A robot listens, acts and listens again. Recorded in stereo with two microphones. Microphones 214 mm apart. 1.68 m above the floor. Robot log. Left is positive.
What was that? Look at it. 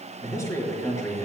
cmd yaw +30
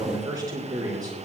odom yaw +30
note: So it is at 20° right.
cmd yaw -20
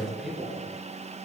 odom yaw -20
end: Found it: a man speaking, straight ahead.